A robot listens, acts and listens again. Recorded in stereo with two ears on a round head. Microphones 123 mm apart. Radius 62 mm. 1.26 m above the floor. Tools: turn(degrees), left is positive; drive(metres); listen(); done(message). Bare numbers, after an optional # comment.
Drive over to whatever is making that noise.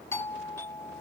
# The doorbell: about 20° left or 160° left.
turn(20)
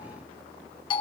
# So it is at 140° left.
turn(140)
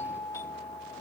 # The doorbell is now 25° left.
turn(25)
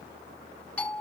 # The doorbell is now 10° left.
turn(10)
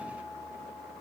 drive(1.0)
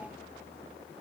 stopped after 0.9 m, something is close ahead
listen()
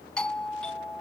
# The doorbell is now 10° left.
turn(10)
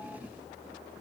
listen()
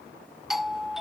done("I am next to the doorbell.")